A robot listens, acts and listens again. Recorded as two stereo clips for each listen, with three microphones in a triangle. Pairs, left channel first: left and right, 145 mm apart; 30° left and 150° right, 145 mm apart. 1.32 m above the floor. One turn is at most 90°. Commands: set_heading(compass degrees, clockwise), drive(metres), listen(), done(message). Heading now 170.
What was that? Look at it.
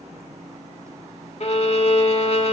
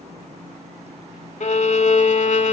set_heading(115)
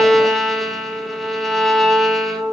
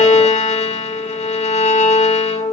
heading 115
done("Found it: a violin, straight ahead.")